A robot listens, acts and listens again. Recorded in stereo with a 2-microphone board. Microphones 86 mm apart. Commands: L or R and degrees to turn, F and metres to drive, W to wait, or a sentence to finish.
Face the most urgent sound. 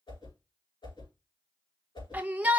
R20
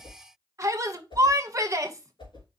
R140
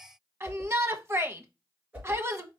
R35
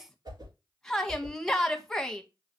Facing the shout.